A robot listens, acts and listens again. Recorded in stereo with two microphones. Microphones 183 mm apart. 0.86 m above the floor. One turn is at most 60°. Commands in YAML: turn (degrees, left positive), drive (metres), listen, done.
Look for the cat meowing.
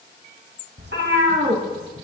turn: -60
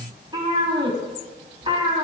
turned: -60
turn: -30
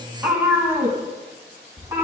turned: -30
turn: -15
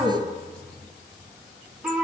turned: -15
done: "Facing the cat meowing."